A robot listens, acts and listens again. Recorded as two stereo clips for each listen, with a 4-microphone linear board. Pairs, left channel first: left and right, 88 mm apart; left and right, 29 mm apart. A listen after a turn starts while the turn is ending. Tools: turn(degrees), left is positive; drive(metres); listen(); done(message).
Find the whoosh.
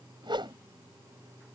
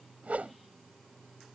turn(degrees=-60)
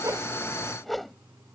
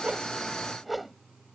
done("Found it: a whoosh, straight ahead.")